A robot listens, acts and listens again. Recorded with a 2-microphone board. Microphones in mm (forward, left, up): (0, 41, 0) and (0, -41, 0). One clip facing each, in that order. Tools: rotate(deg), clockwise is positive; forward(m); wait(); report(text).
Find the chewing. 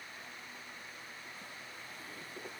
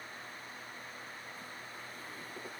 wait()
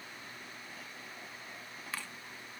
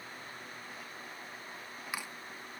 rotate(30)
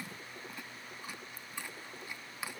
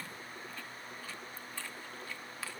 rotate(-15)
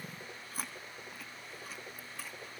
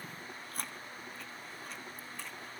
report("Facing the chewing, under 1 m away.")